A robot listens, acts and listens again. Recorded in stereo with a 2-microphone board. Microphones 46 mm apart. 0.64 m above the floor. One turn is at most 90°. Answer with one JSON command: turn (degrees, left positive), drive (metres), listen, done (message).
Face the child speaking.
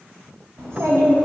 {"turn": -65}
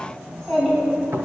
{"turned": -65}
{"done": "Found it: a child speaking, straight ahead, over 4 m away."}